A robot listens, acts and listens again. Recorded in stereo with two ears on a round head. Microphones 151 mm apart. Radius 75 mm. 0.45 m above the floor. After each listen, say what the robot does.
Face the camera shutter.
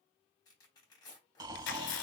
Turn 90° left.
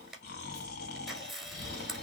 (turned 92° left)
Facing the camera shutter.